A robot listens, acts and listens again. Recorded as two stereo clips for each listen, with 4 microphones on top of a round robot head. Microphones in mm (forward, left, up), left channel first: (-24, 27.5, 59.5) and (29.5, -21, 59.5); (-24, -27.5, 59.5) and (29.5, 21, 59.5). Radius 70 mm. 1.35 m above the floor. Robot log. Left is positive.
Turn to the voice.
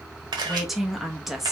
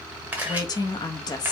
note: The woman speaking: 130° right.
cmd yaw -130
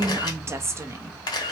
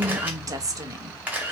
end: Found it: a woman speaking, straight ahead.